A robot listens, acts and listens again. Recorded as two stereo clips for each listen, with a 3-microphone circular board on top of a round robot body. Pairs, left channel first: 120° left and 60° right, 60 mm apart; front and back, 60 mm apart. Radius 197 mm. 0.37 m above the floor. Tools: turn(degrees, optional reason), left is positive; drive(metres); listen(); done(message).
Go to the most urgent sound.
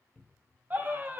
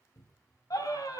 drive(metres=1.0)
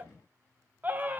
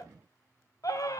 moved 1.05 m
drive(metres=1.0)
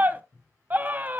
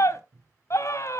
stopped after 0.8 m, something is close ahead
done("Arrived at the scream, straight ahead.")